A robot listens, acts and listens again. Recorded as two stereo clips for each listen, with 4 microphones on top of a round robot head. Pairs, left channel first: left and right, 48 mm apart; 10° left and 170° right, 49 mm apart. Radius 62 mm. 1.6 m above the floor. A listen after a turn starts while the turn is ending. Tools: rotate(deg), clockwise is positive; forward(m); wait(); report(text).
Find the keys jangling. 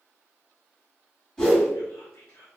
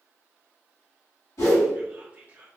wait()
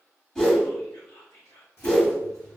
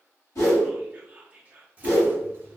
rotate(-155)
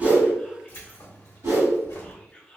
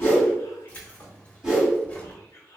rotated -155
rotate(-75)
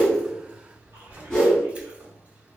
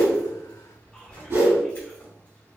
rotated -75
rotate(25)
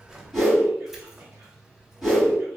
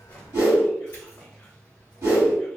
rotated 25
report("Facing the keys jangling, 1 to 2 m away.")